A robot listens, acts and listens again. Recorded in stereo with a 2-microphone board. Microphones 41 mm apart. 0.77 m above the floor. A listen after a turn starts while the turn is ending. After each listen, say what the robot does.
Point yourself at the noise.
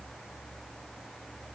Keep listening.
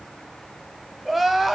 Turn 30° left.
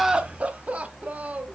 Turn 35° right.
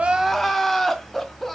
Found it: crying, straight ahead.